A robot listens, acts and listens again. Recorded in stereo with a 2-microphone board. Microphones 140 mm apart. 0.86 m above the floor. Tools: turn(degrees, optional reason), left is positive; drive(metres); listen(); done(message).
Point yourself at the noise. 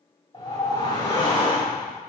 turn(degrees=35, reason="The whoosh: about 35° left or 145° left.")
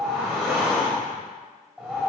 done("Found it: a whoosh, straight ahead, 1 to 2 m away.")